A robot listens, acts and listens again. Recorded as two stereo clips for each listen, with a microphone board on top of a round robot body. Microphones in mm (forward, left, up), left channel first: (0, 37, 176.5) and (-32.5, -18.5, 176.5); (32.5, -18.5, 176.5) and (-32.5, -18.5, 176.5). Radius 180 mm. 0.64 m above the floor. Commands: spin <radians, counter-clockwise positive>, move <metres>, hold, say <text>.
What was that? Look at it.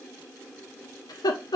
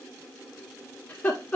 spin 1.22
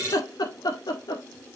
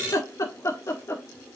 spin 0.87
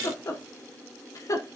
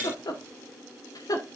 spin 0.44
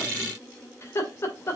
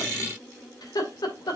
spin 0.17
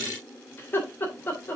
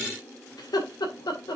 say Facing the laughter.